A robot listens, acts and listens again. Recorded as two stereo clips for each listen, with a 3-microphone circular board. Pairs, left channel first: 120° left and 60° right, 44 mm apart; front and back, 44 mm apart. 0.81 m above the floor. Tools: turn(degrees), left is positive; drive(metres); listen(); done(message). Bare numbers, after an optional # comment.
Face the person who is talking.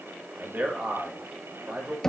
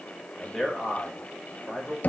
# The man speaking: 90° right.
turn(-90)
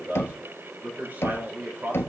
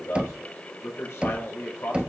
# The man speaking is now 15° right.
turn(-15)
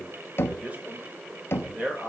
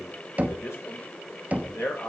done("Found it: a man speaking, straight ahead, 2 to 4 m away.")